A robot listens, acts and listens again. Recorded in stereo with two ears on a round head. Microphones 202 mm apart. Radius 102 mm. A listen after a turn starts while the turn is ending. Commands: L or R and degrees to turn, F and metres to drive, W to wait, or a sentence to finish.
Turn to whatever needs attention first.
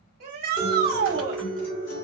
R45
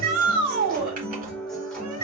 R90
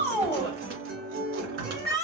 Facing the shout.